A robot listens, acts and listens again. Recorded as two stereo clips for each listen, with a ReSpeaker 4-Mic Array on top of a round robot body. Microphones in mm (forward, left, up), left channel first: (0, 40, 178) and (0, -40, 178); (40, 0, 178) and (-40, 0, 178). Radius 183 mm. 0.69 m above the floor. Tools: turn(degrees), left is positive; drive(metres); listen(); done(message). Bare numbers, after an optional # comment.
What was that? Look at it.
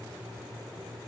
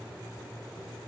listen()
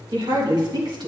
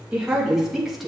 # The woman speaking: 90° right.
turn(-90)
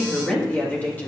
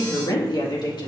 # The woman speaking is now 20° left.
turn(20)
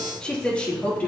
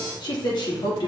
# The woman speaking is now 20° left.
turn(20)
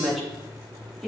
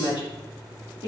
done("Found it: a woman speaking, straight ahead, 2 to 4 m away.")